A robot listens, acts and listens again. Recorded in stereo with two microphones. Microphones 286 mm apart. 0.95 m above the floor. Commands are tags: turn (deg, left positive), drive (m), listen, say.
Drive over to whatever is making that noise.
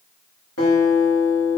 <turn deg="55"/>
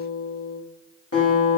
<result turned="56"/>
<turn deg="60"/>
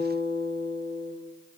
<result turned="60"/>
<drive m="1.0"/>
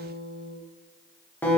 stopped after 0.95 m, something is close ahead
<say>Arrived at the guitar, straight ahead.</say>